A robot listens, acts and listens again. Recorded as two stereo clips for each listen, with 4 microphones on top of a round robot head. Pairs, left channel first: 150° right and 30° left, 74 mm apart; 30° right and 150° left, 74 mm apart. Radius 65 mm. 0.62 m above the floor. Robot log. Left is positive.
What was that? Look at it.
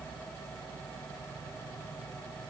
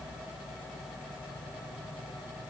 cmd idle
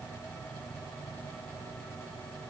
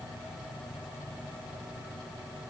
cmd idle
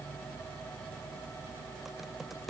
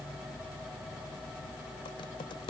note: The typing on a keyboard: 55° right.
cmd yaw -55
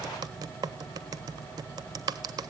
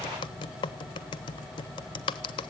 end: Found it: typing on a keyboard, straight ahead, under 1 m away.